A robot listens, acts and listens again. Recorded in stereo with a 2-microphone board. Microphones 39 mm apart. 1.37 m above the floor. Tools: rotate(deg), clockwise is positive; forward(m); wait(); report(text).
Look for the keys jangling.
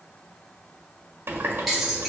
rotate(30)
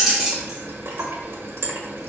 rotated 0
rotate(30)
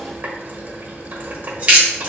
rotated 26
rotate(145)
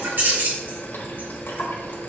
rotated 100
rotate(45)
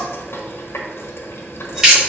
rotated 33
rotate(15)
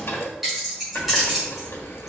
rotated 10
report("Found it: keys jangling, straight ahead.")